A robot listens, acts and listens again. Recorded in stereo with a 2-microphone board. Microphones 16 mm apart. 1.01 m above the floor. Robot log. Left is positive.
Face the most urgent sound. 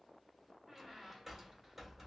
cmd idle
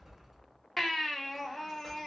cmd yaw +30
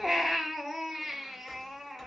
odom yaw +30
note: So it is at 15° right.
cmd yaw -15
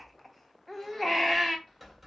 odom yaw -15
end: Facing the baby crying.